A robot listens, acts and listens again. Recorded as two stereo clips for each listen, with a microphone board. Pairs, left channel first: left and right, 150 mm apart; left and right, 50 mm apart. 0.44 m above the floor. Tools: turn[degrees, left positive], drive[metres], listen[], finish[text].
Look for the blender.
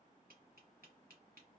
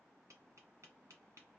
Action: listen[]
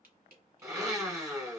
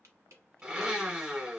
Thought: The blender: about 20° right or 160° right.
Action: turn[-20]
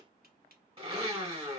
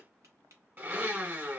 Thought: So it is at 135° right.
Action: turn[-135]
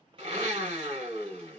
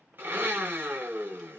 Thought: The blender is now 50° right.
Action: turn[-50]
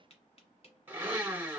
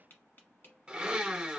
Thought: The blender is now 15° right.
Action: turn[-15]
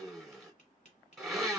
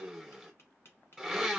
Action: finish[Found it: a blender, straight ahead.]